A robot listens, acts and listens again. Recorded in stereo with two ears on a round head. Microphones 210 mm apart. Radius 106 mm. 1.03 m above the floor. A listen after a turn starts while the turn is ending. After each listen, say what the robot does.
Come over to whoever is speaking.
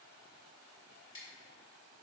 Keep listening.
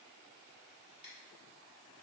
Keep listening.
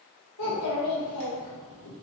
Turn 90° left.
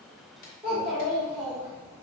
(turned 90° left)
Drive 1.0 m forward.
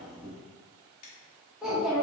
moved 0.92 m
Drive 1.0 m forward.
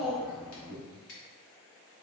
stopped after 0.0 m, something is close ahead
I am next to the child speaking.